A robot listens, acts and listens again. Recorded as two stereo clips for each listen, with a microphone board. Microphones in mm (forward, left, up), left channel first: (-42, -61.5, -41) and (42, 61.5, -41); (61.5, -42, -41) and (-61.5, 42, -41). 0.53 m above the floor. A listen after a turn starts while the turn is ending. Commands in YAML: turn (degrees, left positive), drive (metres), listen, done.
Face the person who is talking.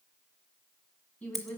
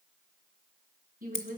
turn: 160
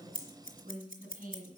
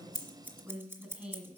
turn: 65
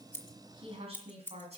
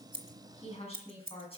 turn: 15
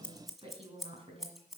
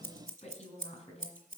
turn: 10
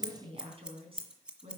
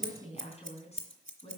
done: "Facing the woman speaking, 2 to 4 m away."